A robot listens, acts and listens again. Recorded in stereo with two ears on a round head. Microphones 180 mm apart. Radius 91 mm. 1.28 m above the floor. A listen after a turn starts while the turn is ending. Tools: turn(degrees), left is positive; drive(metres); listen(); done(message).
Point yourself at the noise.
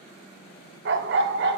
turn(degrees=-60)
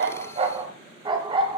turn(degrees=-25)
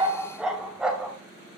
done("Facing the dog barking.")